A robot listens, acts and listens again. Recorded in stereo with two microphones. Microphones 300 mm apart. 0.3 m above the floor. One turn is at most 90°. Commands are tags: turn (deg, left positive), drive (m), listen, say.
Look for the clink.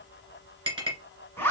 <turn deg="-15"/>
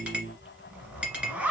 <say>Facing the clink.</say>